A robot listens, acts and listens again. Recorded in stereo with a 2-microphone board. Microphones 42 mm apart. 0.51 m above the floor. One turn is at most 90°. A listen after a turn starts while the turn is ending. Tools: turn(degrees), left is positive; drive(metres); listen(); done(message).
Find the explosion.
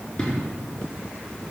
turn(degrees=30)
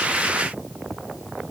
listen()
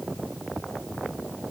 done("I heard an explosion, but can't make it out now. It was about 15° right or 135° left.")